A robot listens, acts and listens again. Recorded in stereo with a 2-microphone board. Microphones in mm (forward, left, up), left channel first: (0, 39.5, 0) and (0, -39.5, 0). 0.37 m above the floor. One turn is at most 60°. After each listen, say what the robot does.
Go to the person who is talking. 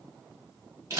Keep listening.
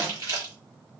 Keep listening.
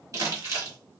I can't make out anyone speaking to turn to.